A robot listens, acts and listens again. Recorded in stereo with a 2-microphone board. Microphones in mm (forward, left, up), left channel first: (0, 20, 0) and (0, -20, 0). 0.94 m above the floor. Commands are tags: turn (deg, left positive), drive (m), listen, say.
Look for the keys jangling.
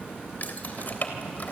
<turn deg="50"/>
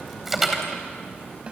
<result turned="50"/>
<say>Facing the keys jangling, 2 to 4 m away.</say>